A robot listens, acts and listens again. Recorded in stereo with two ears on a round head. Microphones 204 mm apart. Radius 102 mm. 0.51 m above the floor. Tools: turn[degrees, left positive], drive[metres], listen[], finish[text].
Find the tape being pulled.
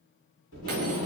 Thought: The tape being pulled: about 65° left or 115° left.
Action: turn[65]
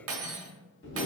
Thought: So it is at 50° left.
Action: turn[50]
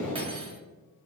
Action: finish[Found it: tape being pulled, straight ahead.]